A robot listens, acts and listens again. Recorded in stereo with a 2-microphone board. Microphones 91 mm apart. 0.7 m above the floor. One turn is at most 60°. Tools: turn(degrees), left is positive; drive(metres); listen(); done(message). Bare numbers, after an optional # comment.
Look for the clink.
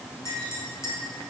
# The clink: about 30° left or 150° left.
turn(30)
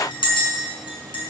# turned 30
# So it is at 120° left.
turn(60)
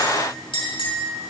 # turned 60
# The clink is now 70° left.
turn(60)
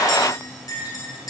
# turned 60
# The clink is now 40° left.
turn(40)
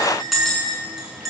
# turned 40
done("Found it: a clink, straight ahead.")